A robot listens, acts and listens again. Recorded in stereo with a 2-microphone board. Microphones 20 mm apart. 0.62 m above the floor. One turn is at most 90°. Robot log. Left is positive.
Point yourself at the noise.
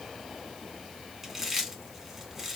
cmd yaw -30
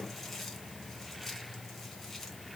note: So it is at 20° left.
cmd yaw +20
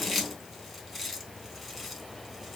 end: Facing the chewing, 1 to 2 m away.